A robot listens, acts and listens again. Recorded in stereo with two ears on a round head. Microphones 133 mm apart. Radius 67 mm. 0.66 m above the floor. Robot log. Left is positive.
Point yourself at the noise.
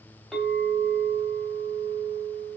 cmd yaw +30
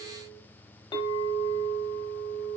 note: So it is at 150° left.
cmd yaw +150
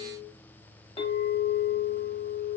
note: The clink is now 35° left.
cmd yaw +35
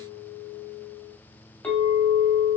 note: The clink is now 10° left.
cmd yaw +10
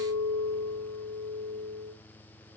end: Found it: a clink, straight ahead, under 1 m away.